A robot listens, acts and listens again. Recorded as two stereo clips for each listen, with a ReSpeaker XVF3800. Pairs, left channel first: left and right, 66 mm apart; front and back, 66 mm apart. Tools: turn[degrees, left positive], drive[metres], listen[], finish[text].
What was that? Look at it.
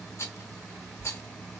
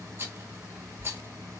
Thought: The rattle: 130° left.
Action: turn[130]
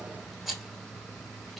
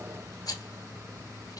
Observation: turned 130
Action: finish[Facing the rattle, under 1 m away.]